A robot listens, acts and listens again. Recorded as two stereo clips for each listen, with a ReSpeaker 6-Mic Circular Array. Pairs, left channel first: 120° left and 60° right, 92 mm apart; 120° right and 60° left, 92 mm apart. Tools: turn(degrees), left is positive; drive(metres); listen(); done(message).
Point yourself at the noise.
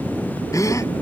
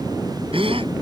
turn(degrees=65)
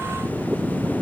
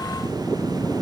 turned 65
done("I heard a gasp from this way, but can't make it out now.")